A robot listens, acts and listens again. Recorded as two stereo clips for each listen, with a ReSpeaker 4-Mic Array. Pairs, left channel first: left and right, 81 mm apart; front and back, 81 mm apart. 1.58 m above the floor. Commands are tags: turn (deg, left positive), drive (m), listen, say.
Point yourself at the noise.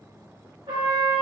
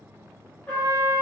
<turn deg="-75"/>
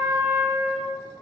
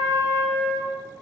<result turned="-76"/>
<say>Facing the trumpet.</say>